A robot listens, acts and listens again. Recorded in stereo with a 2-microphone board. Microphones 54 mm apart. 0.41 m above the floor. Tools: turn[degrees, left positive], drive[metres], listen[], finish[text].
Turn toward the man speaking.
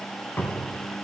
Action: listen[]
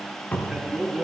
Thought: The man speaking: about 20° right or 160° right.
Action: turn[-20]
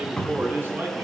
Thought: So it is at 140° right.
Action: turn[-140]
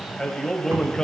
Thought: The man speaking is now 15° left.
Action: turn[15]
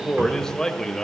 Thought: The man speaking is now 10° left.
Action: turn[10]
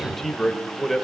Action: finish[Facing the man speaking, 1 to 2 m away.]